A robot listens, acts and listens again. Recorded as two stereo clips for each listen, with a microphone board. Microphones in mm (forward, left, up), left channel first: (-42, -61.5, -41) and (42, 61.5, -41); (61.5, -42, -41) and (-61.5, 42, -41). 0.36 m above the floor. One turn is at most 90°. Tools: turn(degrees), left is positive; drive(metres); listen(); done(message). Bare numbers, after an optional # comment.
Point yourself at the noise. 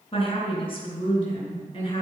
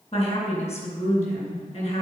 # The woman speaking: 75° right.
turn(-75)
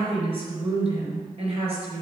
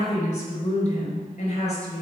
# The woman speaking is now 10° left.
turn(10)
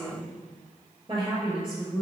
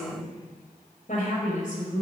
done("Found it: a woman speaking, straight ahead, over 4 m away.")